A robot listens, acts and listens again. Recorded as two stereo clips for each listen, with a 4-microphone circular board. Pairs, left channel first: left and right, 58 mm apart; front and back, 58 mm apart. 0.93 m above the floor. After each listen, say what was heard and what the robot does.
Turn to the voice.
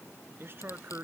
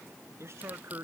The man speaking: 140° right. Turn 140° right.
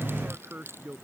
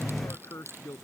The man speaking is now 30° right. Turn 30° right.
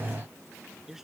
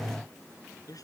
Found it: a man speaking, straight ahead.